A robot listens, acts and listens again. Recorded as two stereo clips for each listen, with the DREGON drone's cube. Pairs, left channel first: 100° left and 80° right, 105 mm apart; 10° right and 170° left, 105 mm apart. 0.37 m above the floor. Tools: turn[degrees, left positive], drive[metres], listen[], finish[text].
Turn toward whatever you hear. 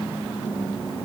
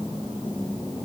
Action: listen[]
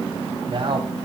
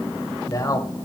Thought: The man speaking: 60° right.
Action: turn[-60]
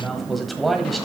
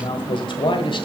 Thought: The man speaking is now 10° left.
Action: turn[10]
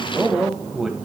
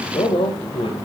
Action: finish[Facing the man speaking, 1 to 2 m away.]